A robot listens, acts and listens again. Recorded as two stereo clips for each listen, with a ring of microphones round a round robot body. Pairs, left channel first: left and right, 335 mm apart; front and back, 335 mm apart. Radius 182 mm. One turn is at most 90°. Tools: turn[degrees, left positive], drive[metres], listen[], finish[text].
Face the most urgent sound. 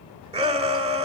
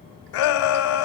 Thought: The shout: 20° right.
Action: turn[-20]
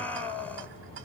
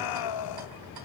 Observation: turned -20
Action: finish[Found it: a shout, straight ahead.]